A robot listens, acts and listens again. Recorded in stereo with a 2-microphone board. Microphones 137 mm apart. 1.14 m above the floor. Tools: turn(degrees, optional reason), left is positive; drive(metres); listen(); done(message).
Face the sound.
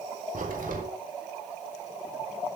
turn(degrees=-90)
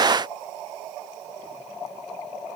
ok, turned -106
turn(degrees=15, reason="Nothing new. It was at 15° left.")
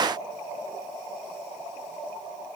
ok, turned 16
done("I heard a crack from this way, but can't make it out now.")